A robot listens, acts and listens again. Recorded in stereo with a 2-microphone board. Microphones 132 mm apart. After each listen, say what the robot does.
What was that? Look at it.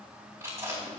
Turn 20° right.
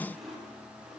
Facing the chewing, 2 to 4 m away.